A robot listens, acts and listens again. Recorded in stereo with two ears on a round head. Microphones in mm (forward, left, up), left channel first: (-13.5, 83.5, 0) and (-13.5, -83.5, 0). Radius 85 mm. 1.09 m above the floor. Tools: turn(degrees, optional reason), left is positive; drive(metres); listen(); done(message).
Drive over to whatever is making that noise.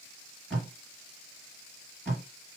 turn(degrees=30)
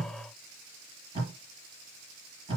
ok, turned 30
turn(degrees=-25, reason="So it is at 25° right.")
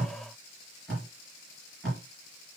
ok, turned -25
drive(metres=1.0)
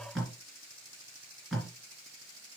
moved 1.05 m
drive(metres=1.0)
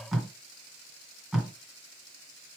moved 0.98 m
drive(metres=1.0)
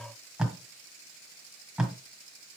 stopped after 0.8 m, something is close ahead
done("Arrived at the tape being pulled, straight ahead.")